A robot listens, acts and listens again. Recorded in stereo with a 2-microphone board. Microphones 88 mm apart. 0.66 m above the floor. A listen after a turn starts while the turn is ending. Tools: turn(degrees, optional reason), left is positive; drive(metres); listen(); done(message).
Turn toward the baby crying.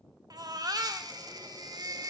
turn(degrees=-45, reason="The baby crying: about 45° right or 135° right.")
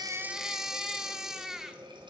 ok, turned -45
done("Facing the baby crying.")